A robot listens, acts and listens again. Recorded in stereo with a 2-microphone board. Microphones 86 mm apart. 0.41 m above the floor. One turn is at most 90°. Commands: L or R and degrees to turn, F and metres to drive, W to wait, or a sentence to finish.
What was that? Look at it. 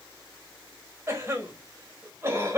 R30
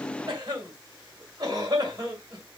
R90
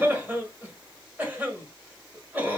R25
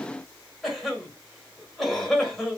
Facing the cough, 1 to 2 m away.